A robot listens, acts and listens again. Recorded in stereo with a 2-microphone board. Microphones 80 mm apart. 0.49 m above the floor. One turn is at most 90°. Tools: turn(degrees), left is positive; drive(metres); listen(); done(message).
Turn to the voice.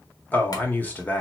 turn(degrees=20)
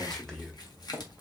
turn(degrees=10)
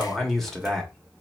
done("Found it: a man speaking, straight ahead, 1 to 2 m away.")